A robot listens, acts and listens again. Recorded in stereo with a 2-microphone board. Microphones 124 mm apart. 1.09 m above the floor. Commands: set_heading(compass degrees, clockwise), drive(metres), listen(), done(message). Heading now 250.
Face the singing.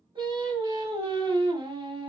set_heading(290)
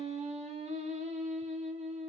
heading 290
set_heading(25)
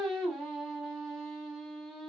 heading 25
done("Facing the singing.")